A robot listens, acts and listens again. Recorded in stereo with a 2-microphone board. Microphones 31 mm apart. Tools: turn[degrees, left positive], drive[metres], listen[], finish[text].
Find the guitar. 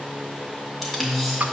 Thought: The guitar: about 55° right or 125° right.
Action: turn[-55]
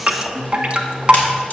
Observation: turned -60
Action: finish[Found it: a guitar, straight ahead.]